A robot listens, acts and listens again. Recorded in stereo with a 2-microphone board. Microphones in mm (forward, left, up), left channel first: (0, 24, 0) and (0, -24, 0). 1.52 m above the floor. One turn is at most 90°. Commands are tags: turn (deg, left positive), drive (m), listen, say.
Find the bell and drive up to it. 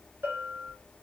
<turn deg="-50"/>
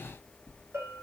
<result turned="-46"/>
<turn deg="-75"/>
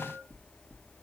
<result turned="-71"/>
<listen/>
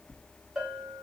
<drive m="1.0"/>
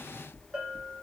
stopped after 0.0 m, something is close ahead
<say>Something is in my way. I am facing the bell but have not reached it.</say>